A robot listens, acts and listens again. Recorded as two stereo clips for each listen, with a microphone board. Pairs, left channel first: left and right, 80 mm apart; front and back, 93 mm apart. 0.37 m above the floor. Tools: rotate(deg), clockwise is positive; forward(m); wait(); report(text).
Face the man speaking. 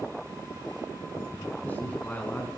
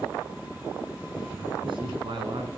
rotate(-160)
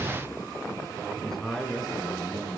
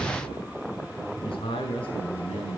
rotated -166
rotate(-10)
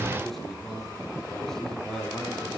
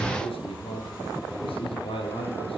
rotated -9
report("Found it: a man speaking, straight ahead, over 4 m away.")